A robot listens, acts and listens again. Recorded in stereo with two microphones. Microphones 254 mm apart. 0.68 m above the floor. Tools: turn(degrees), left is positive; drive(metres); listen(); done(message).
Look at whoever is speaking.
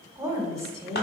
turn(degrees=-30)
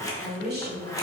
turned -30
turn(degrees=-140)
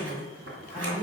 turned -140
turn(degrees=-15)
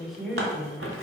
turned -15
done("Facing the woman speaking.")